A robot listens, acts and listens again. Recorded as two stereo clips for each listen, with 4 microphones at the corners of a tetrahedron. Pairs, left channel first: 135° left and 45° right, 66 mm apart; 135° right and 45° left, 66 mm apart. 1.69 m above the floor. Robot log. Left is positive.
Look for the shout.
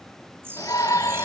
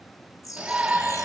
note: The shout: 120° left.
cmd yaw +120
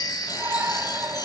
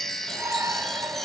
end: Found it: a shout, straight ahead.